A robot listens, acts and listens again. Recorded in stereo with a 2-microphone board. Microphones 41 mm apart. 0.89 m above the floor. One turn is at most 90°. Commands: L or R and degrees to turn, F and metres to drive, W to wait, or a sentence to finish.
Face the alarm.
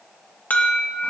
L50
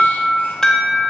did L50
L15
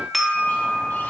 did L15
Facing the alarm.